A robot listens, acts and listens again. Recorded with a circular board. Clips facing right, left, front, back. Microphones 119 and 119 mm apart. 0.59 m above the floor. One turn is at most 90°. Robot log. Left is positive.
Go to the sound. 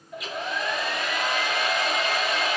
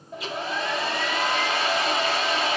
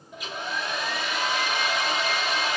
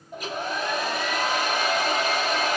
note: The hair dryer: 145° left.
cmd yaw +90
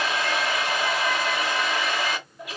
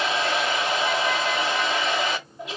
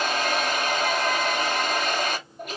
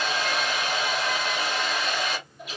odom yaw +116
note: The hair dryer is now 30° left.
cmd yaw +30
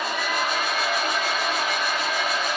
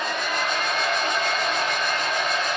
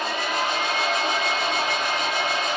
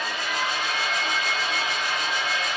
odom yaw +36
cmd fwd 1.0
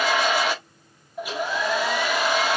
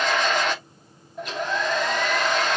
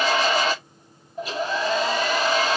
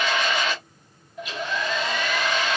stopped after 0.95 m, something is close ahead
note: The hair dryer is now 15° right.
cmd yaw -15
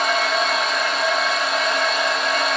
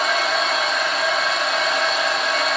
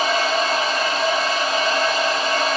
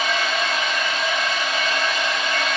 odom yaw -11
end: Arrived at the hair dryer, straight ahead.